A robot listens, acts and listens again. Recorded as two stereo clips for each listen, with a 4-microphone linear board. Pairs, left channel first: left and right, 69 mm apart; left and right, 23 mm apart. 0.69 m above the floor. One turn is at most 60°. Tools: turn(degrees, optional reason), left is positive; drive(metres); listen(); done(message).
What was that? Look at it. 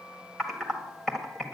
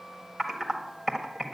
turn(degrees=30)
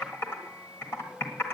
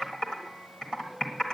turn(degrees=60, reason="So it is at 145° left.")
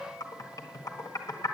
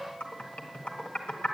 turn(degrees=60, reason="The typing on a keyboard is now 70° left.")
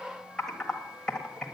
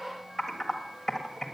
turn(degrees=10, reason="The typing on a keyboard is now 10° left.")
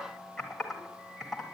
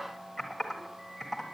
done("Found it: typing on a keyboard, straight ahead, 1 to 2 m away.")